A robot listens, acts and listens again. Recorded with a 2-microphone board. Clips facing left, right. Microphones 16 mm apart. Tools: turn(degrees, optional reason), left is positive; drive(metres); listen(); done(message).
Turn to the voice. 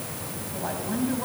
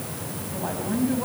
turn(degrees=30)
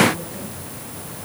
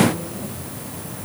listen()
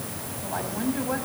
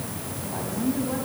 turn(degrees=140, reason="So it is at 140° left.")
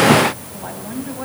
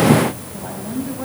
turn(degrees=15, reason="The woman speaking is now 15° left.")
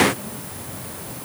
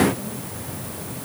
listen()
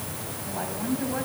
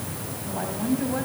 done("Found it: a woman speaking, straight ahead.")